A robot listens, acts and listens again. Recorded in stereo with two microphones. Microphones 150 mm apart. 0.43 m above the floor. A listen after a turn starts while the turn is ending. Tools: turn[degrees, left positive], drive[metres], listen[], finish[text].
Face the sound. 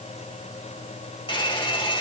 Thought: The hair dryer: about 35° left or 145° left.
Action: turn[35]
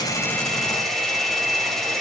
Action: finish[Facing the hair dryer, 1 to 2 m away.]